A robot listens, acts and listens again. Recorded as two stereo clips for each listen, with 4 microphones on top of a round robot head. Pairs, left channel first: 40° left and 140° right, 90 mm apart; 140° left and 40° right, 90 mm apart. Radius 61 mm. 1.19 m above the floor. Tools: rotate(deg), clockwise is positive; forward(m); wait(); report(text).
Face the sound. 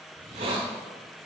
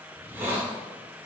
rotate(110)
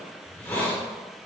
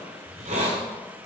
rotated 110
rotate(30)
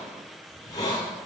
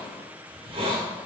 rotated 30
rotate(10)
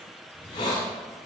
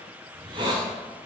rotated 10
report("Found it: a hiss, straight ahead, 1 to 2 m away.")